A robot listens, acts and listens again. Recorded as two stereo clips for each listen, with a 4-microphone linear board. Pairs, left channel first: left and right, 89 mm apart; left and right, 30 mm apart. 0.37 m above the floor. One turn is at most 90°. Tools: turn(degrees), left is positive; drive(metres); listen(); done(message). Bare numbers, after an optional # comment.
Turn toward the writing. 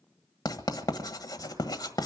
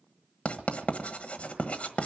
# The writing: about 45° left or 135° left.
turn(45)
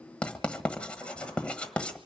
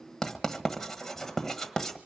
# So it is at 15° left.
turn(15)
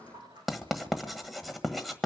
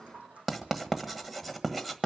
done("Found it: writing, straight ahead, 1 to 2 m away.")